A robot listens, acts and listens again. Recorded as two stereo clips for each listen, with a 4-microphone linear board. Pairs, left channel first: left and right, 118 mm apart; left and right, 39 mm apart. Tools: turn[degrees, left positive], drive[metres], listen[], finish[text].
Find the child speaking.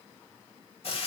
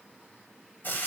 Action: listen[]
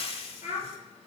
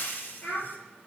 Thought: The child speaking: about 70° left or 110° left.
Action: turn[70]
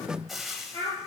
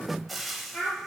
Thought: So it is at 30° left.
Action: turn[30]
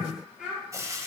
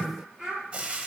Action: finish[Found it: a child speaking, straight ahead, over 4 m away.]